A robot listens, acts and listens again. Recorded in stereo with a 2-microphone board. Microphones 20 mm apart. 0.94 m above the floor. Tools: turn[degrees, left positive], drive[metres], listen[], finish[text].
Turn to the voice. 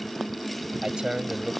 Thought: The man speaking: about 50° right or 130° right.
Action: turn[-50]
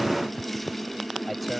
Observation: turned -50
Action: finish[Found it: a man speaking, straight ahead.]